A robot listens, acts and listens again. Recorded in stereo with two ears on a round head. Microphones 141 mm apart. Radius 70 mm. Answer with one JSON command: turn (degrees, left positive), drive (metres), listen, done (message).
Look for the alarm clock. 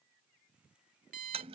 {"turn": -55}
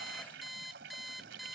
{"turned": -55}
{"done": "Facing the alarm clock."}